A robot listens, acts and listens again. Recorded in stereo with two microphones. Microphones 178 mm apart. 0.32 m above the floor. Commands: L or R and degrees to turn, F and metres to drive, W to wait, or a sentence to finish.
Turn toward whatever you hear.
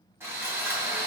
R30
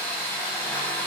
L15
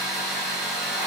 Found it: sawing, straight ahead, 1 to 2 m away.